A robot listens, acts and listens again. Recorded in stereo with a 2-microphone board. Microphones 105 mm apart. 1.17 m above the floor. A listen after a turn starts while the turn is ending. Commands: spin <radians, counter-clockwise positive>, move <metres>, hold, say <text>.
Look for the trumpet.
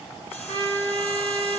spin -0.79
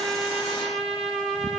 say Found it: a trumpet, straight ahead, 2 to 4 m away.